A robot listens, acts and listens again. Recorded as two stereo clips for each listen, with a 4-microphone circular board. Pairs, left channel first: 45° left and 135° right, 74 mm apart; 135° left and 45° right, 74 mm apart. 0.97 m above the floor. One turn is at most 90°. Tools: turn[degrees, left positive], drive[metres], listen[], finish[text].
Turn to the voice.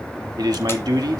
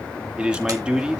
Thought: The man speaking: 120° right.
Action: turn[-90]
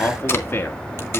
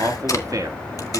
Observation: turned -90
Thought: The man speaking is now 10° right.
Action: turn[-10]
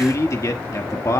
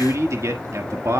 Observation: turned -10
Action: finish[Found it: a man speaking, straight ahead.]